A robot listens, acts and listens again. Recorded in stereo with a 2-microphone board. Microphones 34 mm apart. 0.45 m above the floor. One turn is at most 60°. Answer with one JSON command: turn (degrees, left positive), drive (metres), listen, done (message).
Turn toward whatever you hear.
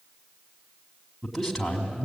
{"turn": 30}
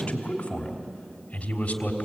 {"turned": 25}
{"turn": 60}
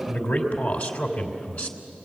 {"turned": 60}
{"turn": 60}
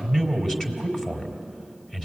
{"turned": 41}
{"turn": 20}
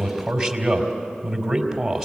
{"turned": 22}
{"done": "Found it: a man speaking, straight ahead, 2 to 4 m away."}